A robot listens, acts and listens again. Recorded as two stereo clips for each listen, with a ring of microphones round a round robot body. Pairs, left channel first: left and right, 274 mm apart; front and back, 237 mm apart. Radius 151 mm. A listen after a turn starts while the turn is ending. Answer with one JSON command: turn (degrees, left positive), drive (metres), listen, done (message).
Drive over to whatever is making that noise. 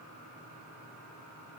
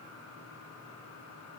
{"listen": true}
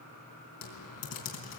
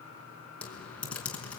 {"turn": 85}
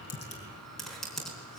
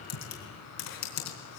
{"drive": 1.0}
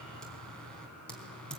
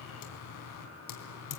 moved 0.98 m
{"drive": 1.0}
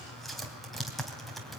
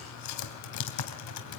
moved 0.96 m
{"drive": 1.0}
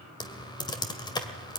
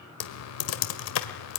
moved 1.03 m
{"turn": 15}
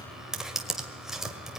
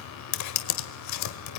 {"drive": 1.0}
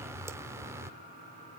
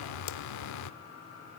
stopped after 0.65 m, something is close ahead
{"turn": -10}
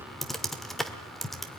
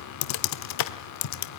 {"done": "I am next to the typing on a keyboard."}